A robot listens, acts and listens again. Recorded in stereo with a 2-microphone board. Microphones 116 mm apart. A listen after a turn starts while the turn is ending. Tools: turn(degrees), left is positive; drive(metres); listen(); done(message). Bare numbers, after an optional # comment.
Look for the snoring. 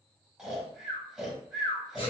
turn(-30)
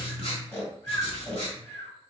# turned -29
# So it is at 25° left.
turn(25)
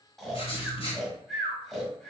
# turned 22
done("Found it: snoring, straight ahead.")